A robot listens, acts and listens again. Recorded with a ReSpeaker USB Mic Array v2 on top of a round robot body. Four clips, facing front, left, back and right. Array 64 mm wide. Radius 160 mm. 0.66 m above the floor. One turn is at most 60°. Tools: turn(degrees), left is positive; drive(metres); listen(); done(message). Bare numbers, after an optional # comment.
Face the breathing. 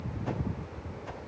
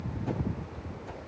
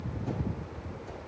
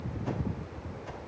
listen()
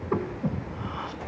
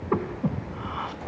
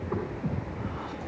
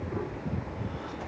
# The breathing: 65° left.
turn(60)
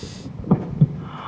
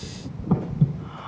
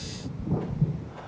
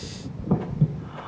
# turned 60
done("Found it: breathing, straight ahead.")